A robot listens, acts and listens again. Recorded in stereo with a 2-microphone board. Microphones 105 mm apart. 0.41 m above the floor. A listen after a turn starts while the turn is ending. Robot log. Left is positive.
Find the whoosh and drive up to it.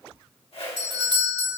note: The whoosh: about 70° left or 110° left.
cmd yaw +70
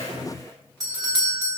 cmd idle
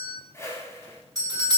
note: So it is at 30° left.
cmd yaw +30
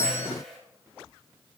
cmd fwd 1.0
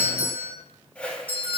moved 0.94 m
note: The whoosh is now 10° left.
cmd yaw +10
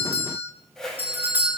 cmd fwd 1.0
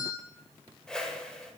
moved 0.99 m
note: The whoosh is now 10° left.
cmd yaw +10
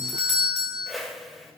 cmd fwd 1.0
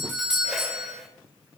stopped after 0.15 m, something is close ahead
cmd idle
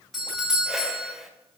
end: I am next to the whoosh.